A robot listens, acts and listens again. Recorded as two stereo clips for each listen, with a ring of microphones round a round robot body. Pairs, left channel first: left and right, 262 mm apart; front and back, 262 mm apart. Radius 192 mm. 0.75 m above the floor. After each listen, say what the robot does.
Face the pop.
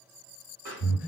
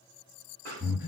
Turn 125° right.
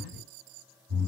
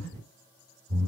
I heard a pop from this way, but can't make it out now.